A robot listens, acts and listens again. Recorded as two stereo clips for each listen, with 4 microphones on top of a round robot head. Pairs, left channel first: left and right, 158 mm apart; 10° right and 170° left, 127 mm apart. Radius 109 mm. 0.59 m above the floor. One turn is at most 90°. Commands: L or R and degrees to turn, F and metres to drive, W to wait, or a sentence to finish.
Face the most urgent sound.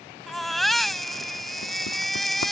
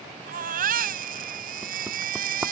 L90
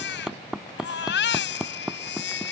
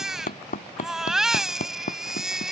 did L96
L80
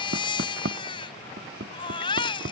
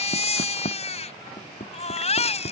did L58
L25
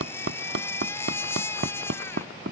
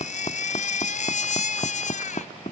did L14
L10
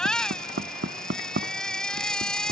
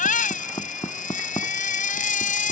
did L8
Facing the baby crying.